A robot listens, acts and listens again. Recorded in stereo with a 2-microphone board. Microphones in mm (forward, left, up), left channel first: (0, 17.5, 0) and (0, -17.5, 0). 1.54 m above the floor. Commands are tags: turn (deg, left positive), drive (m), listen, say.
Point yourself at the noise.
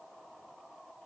<listen/>
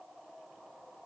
<listen/>
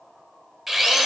<turn deg="-30"/>
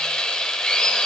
<turn deg="25"/>
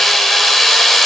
<say>Facing the drill.</say>